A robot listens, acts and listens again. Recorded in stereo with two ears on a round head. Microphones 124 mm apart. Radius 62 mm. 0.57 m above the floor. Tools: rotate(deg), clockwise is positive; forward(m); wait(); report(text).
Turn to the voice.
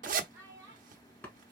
rotate(20)
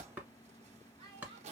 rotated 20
rotate(135)
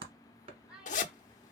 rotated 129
rotate(10)
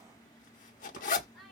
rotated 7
report("Facing the child speaking, 1 to 2 m away.")